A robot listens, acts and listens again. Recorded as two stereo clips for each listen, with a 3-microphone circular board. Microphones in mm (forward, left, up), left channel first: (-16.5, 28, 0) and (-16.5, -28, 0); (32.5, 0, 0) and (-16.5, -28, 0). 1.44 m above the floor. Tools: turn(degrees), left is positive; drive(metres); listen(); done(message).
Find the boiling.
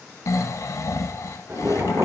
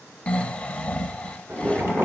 turn(degrees=-115)
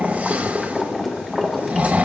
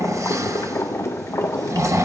done("Found it: boiling, straight ahead, 1 to 2 m away.")